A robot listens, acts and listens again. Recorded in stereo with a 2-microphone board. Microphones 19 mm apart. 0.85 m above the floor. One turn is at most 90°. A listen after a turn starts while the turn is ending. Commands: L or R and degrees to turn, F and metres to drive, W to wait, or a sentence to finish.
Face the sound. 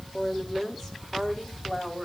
L30
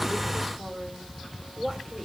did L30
L90
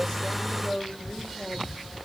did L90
L75
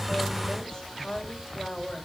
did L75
L25
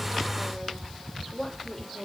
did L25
Found it: a woman speaking, straight ahead, over 4 m away.